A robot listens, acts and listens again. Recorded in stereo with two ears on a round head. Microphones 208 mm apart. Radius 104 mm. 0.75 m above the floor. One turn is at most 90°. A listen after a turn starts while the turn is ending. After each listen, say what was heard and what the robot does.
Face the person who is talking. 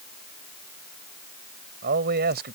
The man speaking: about 45° right or 135° right. Turn 45° right.
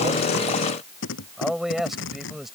Facing the man speaking.